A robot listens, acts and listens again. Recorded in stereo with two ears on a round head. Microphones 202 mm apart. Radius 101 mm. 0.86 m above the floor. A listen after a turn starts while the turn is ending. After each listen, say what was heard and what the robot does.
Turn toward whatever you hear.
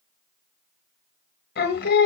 The singing: about 45° left or 135° left. Turn 45° left.
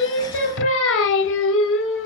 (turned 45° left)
So it is at 80° left. Turn 80° left.
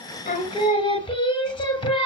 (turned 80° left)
The singing is now 25° left. Turn 25° left.
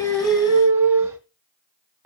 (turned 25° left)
The singing is now 10° right. Turn 10° right.
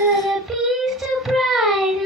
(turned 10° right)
Facing the singing.